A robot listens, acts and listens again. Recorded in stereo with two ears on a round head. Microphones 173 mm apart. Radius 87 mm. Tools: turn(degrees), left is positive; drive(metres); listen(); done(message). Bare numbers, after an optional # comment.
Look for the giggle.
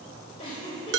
# The giggle: about 25° left or 155° left.
turn(25)
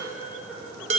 listen()
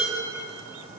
listen()
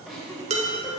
done("Found it: a giggle, straight ahead, 1 to 2 m away.")